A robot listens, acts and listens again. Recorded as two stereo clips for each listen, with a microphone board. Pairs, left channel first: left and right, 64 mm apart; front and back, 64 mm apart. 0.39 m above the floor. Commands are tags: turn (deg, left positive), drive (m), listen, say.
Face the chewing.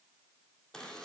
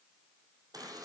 <listen/>
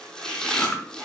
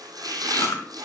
<turn deg="25"/>
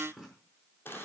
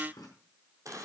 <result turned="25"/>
<listen/>
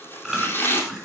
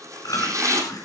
<say>Facing the chewing.</say>